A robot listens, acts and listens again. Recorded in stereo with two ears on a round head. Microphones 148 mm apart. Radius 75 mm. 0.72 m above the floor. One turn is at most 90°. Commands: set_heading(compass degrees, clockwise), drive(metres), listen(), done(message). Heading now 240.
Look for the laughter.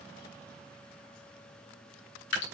listen()
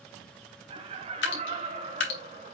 set_heading(280)
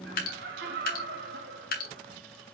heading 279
set_heading(9)
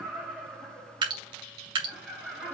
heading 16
done("Facing the laughter, 2 to 4 m away.")